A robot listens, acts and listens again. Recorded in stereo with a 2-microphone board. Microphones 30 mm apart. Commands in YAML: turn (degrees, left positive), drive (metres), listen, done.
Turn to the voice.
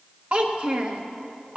turn: -40
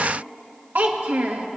turn: -95
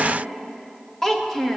turn: 15
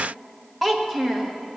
done: "Facing the child speaking, 1 to 2 m away."